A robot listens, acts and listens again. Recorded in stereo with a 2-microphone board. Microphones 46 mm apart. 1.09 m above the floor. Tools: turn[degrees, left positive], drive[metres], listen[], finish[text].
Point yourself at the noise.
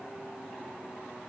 Action: listen[]
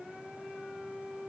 Action: listen[]
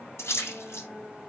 Action: turn[90]
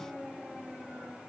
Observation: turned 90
Action: finish[I heard a splash from this way, but can't make it out now.]